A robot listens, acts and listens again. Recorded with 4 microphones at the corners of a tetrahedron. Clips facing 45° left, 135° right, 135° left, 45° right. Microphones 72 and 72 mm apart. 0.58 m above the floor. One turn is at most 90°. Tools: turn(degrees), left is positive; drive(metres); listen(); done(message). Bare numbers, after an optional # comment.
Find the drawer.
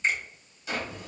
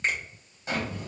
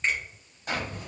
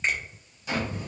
# The drawer: 170° left.
turn(90)
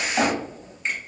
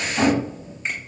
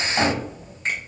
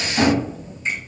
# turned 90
# The drawer is now 85° left.
turn(85)
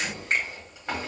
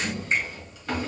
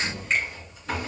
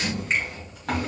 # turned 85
# The drawer is now 20° right.
turn(-20)
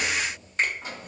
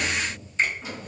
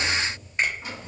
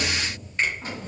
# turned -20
done("Facing the drawer, 1 to 2 m away.")